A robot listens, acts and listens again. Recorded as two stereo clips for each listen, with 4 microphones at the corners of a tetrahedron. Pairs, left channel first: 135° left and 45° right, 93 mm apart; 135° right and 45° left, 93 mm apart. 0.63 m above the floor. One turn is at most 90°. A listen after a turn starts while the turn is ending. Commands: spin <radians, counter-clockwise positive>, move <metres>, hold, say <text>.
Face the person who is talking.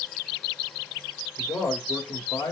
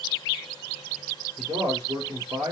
spin 1.40
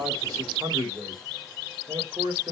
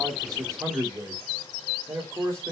spin -0.17
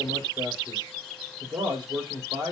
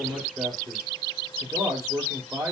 say Found it: a man speaking, straight ahead.